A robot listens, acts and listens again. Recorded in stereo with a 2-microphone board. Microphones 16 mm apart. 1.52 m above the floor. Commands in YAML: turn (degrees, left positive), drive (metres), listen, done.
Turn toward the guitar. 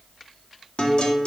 turn: 70
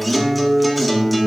done: "Facing the guitar."